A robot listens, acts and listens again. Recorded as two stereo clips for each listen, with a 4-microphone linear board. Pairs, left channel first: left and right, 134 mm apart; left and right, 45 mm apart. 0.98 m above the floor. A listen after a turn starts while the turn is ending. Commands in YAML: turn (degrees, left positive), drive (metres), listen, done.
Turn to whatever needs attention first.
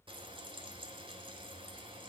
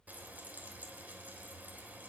listen: true
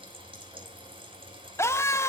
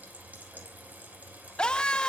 turn: 20
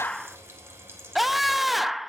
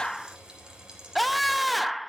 done: "Found it: a scream, straight ahead."